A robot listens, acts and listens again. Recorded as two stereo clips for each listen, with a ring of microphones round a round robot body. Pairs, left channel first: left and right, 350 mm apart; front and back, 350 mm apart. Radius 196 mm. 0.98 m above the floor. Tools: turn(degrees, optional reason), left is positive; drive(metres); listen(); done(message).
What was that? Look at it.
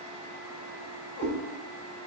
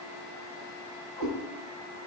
turn(degrees=150, reason="The cat meowing: 150° left.")
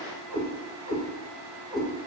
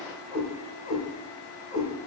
turn(degrees=-50, reason="The cat meowing is now 50° right.")
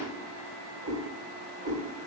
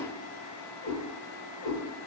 turn(degrees=-25, reason="The cat meowing is now 25° right.")
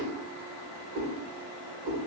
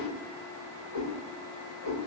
done("Facing the cat meowing, 2 to 4 m away.")